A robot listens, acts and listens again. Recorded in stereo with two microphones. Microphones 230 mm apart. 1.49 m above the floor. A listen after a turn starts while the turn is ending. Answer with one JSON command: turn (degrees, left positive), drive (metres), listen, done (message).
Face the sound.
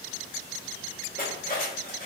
{"turn": 40}
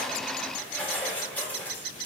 {"done": "Facing the cutlery clinking."}